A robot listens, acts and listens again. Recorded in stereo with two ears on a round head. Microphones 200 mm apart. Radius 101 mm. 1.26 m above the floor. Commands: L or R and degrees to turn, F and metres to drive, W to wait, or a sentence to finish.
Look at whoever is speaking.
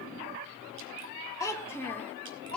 L30
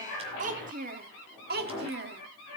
R50
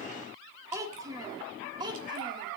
R20
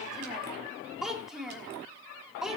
Facing the child speaking.